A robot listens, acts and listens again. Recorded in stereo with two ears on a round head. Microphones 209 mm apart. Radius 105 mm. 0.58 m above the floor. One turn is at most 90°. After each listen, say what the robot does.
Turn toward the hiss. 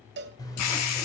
Turn 90° left.
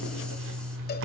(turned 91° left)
Keep listening.
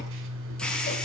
Facing the hiss, 2 to 4 m away.